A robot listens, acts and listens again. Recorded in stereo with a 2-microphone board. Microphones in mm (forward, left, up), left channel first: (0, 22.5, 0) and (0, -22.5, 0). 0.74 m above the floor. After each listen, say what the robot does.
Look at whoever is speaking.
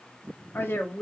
Turn 55° left.
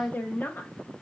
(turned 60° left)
Turn 55° left.
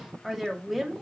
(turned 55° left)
Found it: a woman speaking, straight ahead, 1 to 2 m away.